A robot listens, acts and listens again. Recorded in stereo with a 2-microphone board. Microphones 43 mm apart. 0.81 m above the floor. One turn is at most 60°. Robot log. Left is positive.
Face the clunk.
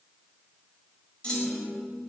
note: The clunk: about 25° left or 155° left.
cmd yaw +25
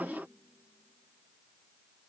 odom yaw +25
cmd idle
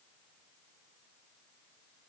end: I heard a clunk, but can't make it out now. It was about straight ahead or 130° left.